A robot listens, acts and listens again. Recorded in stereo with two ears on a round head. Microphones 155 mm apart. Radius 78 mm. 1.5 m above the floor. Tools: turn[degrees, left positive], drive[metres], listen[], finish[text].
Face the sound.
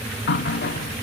Thought: The running tap: about 65° left or 115° left.
Action: turn[65]
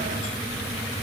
Action: listen[]
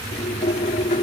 Thought: So it is at 40° left.
Action: turn[40]
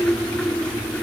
Action: finish[Facing the running tap.]